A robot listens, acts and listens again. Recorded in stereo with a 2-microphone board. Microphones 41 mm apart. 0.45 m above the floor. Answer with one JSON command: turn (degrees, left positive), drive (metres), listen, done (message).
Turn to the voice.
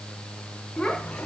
{"turn": 15}
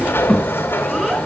{"done": "Found it: a child speaking, straight ahead, 2 to 4 m away."}